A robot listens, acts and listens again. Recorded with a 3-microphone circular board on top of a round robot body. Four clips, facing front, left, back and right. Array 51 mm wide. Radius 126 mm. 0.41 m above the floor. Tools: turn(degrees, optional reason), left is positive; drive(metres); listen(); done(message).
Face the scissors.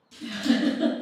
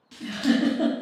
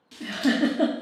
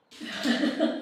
turn(degrees=120, reason="The scissors: 120° left.")
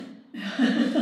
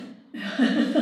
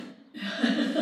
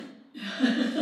listen()
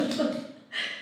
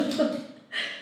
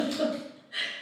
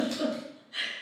listen()
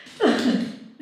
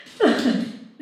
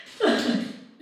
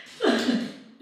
done("Found it: scissors, straight ahead.")